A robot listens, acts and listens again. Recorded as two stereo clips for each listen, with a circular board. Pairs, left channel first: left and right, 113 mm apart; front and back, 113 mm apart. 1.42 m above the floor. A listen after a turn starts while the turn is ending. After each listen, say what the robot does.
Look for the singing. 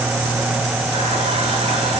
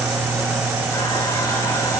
Keep listening.
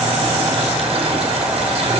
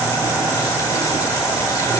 Keep listening.
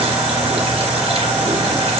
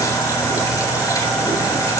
I can't make out singing to turn to.